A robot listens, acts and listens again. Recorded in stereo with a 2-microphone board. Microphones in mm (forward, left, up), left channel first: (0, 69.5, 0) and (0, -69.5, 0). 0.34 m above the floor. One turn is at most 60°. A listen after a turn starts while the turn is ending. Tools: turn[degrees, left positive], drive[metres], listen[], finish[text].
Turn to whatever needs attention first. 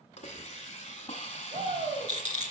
Thought: The shout: about 55° right or 125° right.
Action: turn[-55]
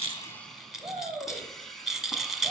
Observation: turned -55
Thought: So it is at 40° right.
Action: turn[-40]
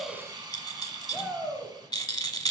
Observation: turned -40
Thought: The shout is now 10° right.
Action: turn[-10]
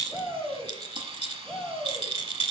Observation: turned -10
Action: finish[Facing the shout.]